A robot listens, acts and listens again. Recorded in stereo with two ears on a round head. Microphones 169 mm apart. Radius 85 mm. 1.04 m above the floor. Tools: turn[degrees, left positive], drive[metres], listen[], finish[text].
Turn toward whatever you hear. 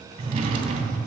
Thought: The drawer: about 35° right or 145° right.
Action: turn[-35]
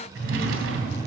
Thought: So it is at 115° right.
Action: turn[-115]
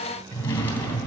Thought: The drawer is now 15° left.
Action: turn[15]
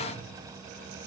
Action: listen[]
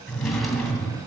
Action: finish[Found it: a drawer, straight ahead, 2 to 4 m away.]